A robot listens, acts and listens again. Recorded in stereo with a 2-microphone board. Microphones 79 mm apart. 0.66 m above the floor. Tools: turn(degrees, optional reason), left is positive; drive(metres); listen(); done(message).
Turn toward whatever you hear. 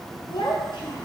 turn(degrees=90)
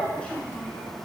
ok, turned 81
turn(degrees=15, reason="So it is at 15° left.")
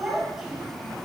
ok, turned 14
done("Facing the child speaking, 2 to 4 m away.")